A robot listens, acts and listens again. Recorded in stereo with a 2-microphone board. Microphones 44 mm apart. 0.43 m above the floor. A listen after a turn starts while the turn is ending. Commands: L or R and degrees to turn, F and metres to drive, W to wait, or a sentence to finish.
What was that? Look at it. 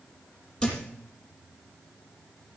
L20
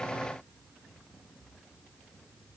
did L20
W
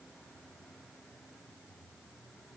I heard a thud, but can't make it out now. It was about straight ahead or 140° left.